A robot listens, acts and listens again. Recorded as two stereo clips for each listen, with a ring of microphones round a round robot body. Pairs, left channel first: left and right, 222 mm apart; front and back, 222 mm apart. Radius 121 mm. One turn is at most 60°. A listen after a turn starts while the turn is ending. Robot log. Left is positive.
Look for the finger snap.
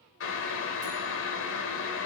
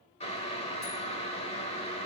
cmd idle
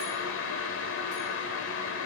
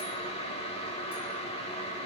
cmd idle
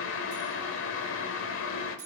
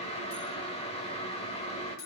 end: I can't make out a finger snap to turn to.